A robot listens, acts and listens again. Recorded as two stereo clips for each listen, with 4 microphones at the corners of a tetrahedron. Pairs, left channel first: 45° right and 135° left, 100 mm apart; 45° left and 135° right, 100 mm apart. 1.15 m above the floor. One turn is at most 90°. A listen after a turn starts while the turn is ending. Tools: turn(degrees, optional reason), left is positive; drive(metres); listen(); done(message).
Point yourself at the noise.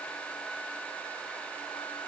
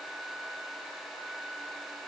listen()
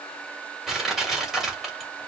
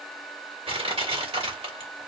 turn(degrees=-90, reason="The crushing: 140° right.")
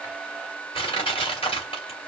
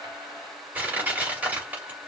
turn(degrees=-60, reason="The crushing is now 60° right.")
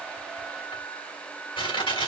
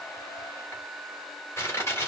turn(degrees=-15, reason="The crushing is now 15° right.")
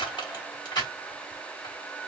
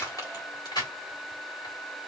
done("Found it: crushing, straight ahead, 2 to 4 m away.")